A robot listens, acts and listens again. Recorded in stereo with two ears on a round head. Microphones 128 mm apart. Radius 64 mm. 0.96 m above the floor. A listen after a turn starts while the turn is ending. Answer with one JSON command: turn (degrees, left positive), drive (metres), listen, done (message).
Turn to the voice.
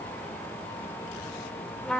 {"listen": true}
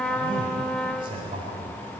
{"turn": -35}
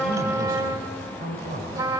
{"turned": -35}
{"turn": -110}
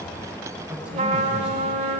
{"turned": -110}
{"listen": true}
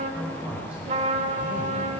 {"turn": -10}
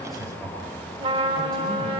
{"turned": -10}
{"done": "Facing the man speaking, over 4 m away."}